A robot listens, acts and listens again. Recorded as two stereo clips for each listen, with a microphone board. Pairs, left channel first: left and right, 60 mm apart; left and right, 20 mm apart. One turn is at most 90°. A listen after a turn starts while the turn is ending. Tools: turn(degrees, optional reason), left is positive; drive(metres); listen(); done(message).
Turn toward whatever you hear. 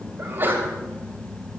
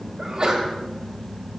turn(degrees=-35, reason="The sneeze: about 35° right or 145° right.")
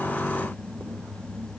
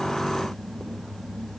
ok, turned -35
listen()
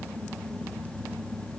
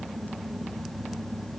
done("I heard a sneeze, but can't make it out now. It was about straight ahead or 110° right.")